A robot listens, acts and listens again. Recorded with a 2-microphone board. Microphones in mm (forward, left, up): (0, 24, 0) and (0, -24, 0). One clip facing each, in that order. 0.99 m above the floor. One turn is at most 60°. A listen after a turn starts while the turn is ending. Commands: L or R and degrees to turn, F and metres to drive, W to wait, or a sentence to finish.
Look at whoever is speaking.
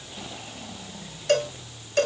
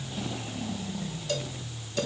W
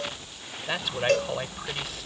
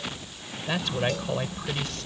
L30
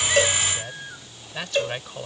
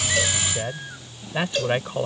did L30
R20
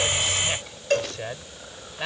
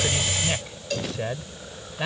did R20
Facing the man speaking.